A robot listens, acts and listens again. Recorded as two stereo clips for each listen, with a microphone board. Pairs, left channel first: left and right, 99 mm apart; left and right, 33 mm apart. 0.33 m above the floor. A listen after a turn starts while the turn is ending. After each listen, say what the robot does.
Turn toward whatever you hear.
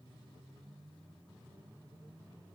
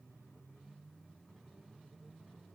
Keep listening.
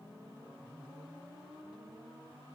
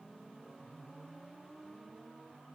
Keep listening.
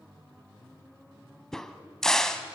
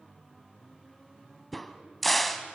Turn 30° left.
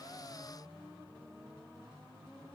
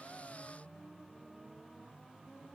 Keep listening.
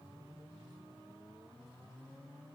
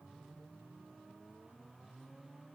I heard a crack, but can't make it out now. It was about 25° right or 145° left.